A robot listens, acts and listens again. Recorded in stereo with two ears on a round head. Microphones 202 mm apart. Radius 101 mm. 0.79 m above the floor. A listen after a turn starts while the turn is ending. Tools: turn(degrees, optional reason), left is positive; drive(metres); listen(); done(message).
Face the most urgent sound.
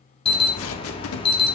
turn(degrees=25, reason="The alarm: about 25° left or 155° left.")
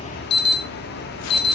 turn(degrees=130, reason="So it is at 130° left.")
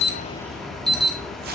done("Found it: an alarm, straight ahead, 1 to 2 m away.")